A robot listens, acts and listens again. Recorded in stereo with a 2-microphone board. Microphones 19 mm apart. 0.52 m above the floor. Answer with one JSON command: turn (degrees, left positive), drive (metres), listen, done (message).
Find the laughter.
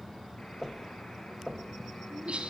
{"turn": -90}
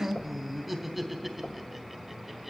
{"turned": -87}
{"done": "Facing the laughter."}